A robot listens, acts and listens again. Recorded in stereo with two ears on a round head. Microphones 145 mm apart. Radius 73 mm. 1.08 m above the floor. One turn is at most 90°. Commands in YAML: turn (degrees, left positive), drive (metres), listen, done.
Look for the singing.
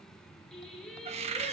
turn: 30
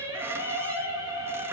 turn: -20
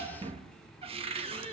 listen: true
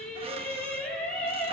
turn: 10
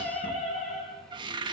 done: "Facing the singing, over 4 m away."